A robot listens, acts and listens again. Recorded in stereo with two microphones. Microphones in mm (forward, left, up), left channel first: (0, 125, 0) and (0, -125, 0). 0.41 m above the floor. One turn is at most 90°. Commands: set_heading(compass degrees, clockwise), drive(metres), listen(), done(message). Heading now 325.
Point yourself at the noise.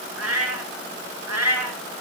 set_heading(55)
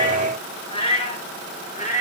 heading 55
set_heading(25)
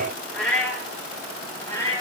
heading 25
set_heading(15)
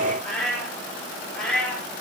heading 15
done("Facing the cat meowing.")